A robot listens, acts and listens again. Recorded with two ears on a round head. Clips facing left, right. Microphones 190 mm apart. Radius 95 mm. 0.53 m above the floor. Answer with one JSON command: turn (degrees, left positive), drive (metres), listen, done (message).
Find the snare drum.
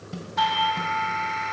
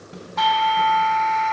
{"turn": 30}
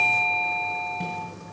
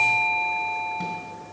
{"listen": true}
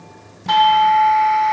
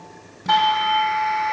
{"listen": true}
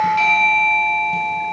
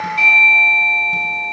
{"done": "I heard a snare drum, but can't make it out now. It was about straight ahead or 120° left."}